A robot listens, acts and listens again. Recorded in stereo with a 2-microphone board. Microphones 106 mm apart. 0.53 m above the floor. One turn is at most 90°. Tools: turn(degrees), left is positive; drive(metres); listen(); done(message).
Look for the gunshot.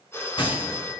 turn(degrees=55)
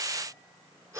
listen()
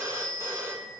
done("I heard a gunshot, but can't make it out now. It was about straight ahead or 70° left.")